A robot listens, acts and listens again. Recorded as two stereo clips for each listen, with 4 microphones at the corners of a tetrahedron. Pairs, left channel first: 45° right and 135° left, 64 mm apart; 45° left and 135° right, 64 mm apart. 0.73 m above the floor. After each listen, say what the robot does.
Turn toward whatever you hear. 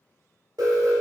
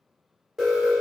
Turn 135° left.
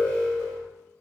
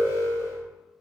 Turn 20° left.
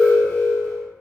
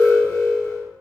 Facing the alarm, 1 to 2 m away.